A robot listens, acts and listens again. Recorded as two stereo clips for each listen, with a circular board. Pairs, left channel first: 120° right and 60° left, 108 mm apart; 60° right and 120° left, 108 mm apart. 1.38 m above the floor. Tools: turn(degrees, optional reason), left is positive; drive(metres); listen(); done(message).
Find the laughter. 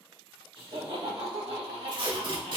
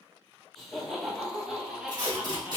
turn(degrees=45, reason="The laughter: 45° left.")
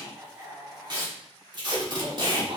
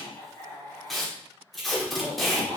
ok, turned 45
turn(degrees=25, reason="The laughter is now 25° left.")
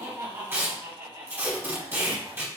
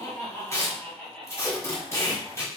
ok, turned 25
turn(degrees=10, reason="The laughter is now 10° left.")
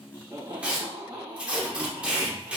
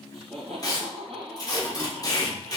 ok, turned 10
done("Facing the laughter, 1 to 2 m away.")